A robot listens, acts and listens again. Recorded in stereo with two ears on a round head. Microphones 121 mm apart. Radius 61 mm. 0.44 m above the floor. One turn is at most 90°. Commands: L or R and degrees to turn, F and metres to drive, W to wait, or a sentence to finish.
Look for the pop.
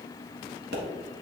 R90
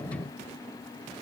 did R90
I heard a pop from this way, but can't make it out now.